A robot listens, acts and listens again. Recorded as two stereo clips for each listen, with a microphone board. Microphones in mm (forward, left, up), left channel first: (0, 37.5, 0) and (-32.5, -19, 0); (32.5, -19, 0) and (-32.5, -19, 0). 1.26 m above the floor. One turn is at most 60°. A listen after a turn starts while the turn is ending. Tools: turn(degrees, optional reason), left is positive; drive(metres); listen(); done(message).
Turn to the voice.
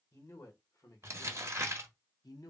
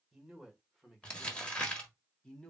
turn(degrees=60, reason="The man speaking: 75° left.")
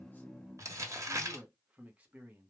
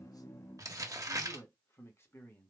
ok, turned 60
turn(degrees=-55, reason="The man speaking is now 55° right.")
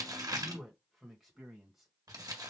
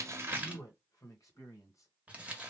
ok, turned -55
turn(degrees=-35, reason="The man speaking is now 35° right.")
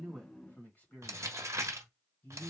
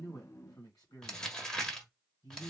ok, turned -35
done("Found it: a man speaking, straight ahead, 1 to 2 m away.")